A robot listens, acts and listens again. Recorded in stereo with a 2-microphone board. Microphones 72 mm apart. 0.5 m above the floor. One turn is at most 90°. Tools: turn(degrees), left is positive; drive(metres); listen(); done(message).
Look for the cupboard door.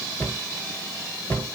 turn(degrees=25)
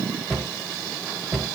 done("Facing the cupboard door, 1 to 2 m away.")